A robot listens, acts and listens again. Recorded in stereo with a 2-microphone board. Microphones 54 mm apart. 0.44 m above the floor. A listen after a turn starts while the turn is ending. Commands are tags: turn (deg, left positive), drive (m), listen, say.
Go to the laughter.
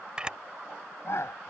<turn deg="65"/>
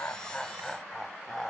<turn deg="10"/>
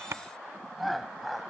<drive m="1.0"/>
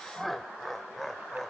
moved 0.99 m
<drive m="1.0"/>
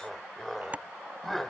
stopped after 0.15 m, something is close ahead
<say>Arrived at the laughter, straight ahead.</say>